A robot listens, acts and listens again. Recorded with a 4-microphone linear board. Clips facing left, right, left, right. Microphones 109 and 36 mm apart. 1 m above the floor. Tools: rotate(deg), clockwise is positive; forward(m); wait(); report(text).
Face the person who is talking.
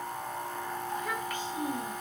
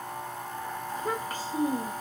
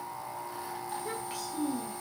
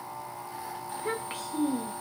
rotate(35)
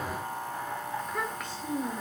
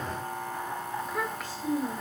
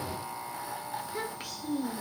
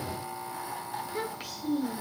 report("Facing the child speaking.")